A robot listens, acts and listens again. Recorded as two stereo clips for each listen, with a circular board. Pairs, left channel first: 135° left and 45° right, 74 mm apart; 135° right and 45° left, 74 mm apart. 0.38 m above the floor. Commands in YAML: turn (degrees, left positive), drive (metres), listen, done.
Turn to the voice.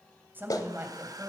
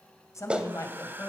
turn: -95
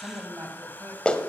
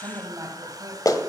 done: "Facing the woman speaking, 2 to 4 m away."